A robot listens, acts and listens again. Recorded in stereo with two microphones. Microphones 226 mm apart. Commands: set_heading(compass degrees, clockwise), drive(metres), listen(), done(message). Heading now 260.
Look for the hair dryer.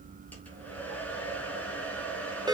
set_heading(230)
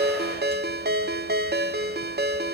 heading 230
listen()
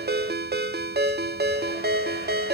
listen()
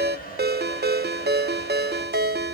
set_heading(90)
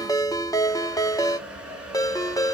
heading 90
done("Found it: a hair dryer, straight ahead, 2 to 4 m away.")